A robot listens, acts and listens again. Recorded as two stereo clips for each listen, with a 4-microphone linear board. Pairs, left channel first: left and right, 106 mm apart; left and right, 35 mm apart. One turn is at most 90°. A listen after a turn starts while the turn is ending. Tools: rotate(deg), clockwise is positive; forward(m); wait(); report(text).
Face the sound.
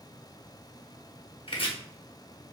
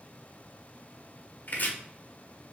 rotate(-55)
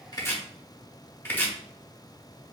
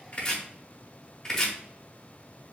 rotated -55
rotate(-20)
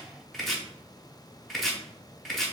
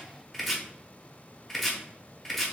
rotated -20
report("Found it: chopping, straight ahead, under 1 m away.")